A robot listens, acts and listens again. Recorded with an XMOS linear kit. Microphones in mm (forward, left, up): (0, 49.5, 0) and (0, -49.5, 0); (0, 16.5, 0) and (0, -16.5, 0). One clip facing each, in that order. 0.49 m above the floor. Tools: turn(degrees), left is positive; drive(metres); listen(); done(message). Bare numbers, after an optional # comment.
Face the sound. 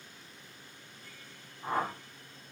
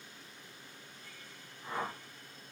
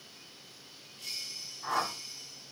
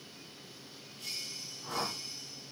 # The whoosh: about 65° left or 115° left.
turn(65)
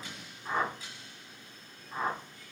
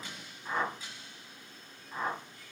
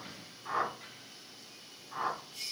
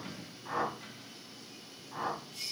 done("Facing the whoosh, 2 to 4 m away.")